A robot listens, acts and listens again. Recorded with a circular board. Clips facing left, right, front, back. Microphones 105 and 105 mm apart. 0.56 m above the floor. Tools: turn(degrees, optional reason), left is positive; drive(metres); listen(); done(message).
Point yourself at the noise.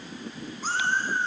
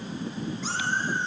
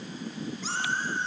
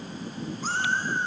turn(degrees=140, reason="The cat meowing: 140° left.")
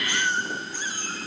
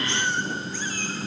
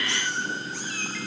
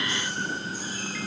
turn(degrees=20, reason="The cat meowing is now 20° left.")
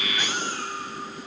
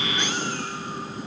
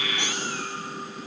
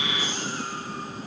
listen()
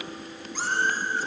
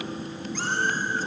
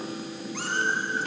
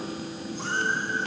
listen()
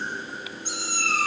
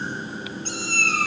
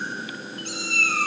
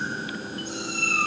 turn(degrees=10, reason="The cat meowing is now 10° left.")
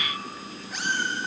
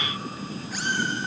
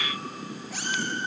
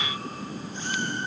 listen()
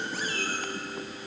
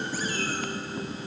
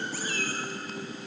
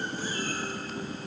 listen()
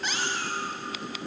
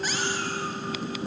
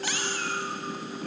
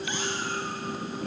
done("Found it: a cat meowing, straight ahead, 2 to 4 m away.")